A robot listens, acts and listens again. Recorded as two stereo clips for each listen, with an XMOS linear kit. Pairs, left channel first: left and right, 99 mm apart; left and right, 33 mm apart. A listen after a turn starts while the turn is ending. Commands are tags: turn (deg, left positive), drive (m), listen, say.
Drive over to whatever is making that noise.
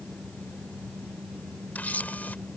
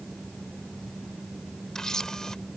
<turn deg="15"/>
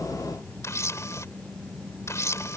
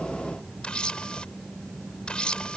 <turn deg="150"/>
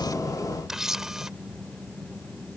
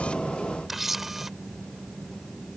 <drive m="1.0"/>
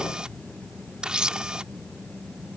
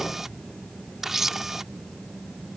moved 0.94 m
<turn deg="-10"/>
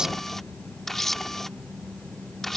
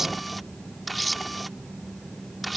<drive m="1.0"/>
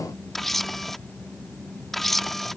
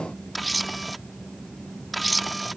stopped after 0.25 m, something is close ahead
<say>I am next to the camera shutter.</say>